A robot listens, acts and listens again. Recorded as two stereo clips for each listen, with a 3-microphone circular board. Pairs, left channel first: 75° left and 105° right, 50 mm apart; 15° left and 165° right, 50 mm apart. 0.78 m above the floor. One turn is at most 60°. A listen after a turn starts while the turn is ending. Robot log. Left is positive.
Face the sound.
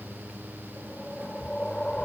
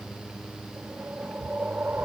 note: The whoosh: 145° left.
cmd yaw +60
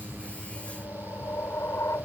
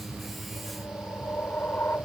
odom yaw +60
note: The whoosh is now 60° left.
cmd yaw +60
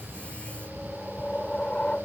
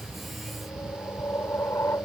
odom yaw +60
end: Facing the whoosh.